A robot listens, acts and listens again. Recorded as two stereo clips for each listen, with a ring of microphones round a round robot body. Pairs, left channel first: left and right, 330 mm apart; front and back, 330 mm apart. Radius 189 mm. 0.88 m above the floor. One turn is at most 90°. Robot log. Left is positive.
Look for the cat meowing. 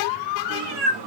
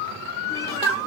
note: The cat meowing: 80° right.
cmd yaw -80
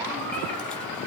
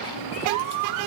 cmd idle
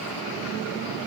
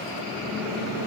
cmd idle
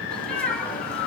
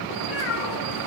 end: Found it: a cat meowing, straight ahead, 2 to 4 m away.